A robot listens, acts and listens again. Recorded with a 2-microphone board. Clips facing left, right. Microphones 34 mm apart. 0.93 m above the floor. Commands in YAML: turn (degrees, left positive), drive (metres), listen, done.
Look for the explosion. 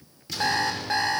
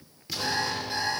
turn: 30
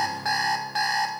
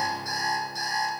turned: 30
listen: true
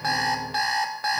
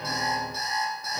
done: "I heard an explosion, but can't make it out now. It was about 30° right or 150° left."